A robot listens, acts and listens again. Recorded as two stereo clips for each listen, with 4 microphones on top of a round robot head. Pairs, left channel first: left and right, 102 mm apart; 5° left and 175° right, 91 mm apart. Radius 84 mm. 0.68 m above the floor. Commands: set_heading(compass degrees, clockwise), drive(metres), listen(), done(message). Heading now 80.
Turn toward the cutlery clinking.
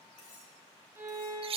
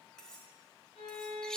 set_heading(350)
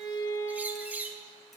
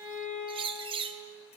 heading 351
listen()
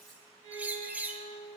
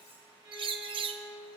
listen()
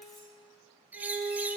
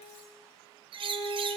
done("I heard cutlery clinking from this way, but can't make it out now.")